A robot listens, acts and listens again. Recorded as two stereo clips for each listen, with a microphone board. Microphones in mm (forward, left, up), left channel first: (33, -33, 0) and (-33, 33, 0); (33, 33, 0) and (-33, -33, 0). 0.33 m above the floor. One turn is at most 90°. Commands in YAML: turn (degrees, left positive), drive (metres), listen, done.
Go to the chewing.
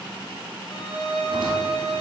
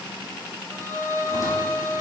listen: true
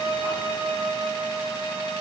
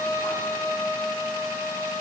listen: true
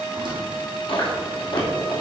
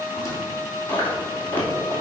turn: -25
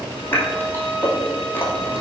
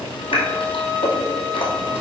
turn: 20
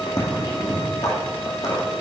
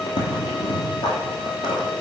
drive: 1.0
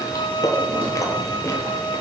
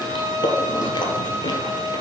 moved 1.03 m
turn: 10
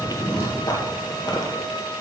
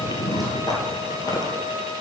drive: 1.0
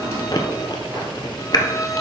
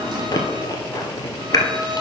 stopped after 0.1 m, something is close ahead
done: "Arrived at the chewing, straight ahead."